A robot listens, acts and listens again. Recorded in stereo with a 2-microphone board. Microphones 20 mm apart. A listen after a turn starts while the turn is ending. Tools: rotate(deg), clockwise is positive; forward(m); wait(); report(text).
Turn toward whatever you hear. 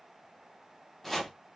rotate(-30)
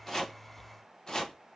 rotate(-145)
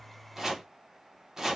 rotate(25)
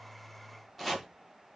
report("Found it: chopping, straight ahead.")